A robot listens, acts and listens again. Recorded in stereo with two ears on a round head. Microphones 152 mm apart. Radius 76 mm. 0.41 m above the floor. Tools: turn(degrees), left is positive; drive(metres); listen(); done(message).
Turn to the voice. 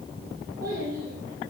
turn(degrees=-55)
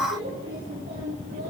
turn(degrees=-70)
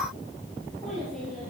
done("Found it: a child speaking, straight ahead, over 4 m away.")